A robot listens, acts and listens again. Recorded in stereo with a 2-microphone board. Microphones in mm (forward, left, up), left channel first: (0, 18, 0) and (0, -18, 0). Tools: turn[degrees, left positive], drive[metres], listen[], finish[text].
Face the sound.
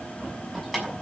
Action: turn[-30]
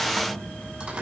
Thought: So it is at 145° right.
Action: turn[-145]
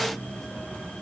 Action: listen[]
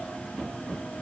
Action: listen[]
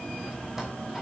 Action: finish[I heard keys jangling from this way, but can't make it out now.]